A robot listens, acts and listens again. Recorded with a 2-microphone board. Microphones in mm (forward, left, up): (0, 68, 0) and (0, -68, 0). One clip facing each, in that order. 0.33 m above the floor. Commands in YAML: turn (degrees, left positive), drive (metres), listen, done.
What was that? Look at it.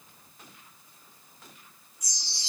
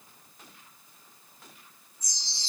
turn: 90
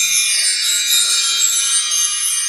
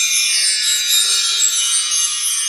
done: "Facing the chime."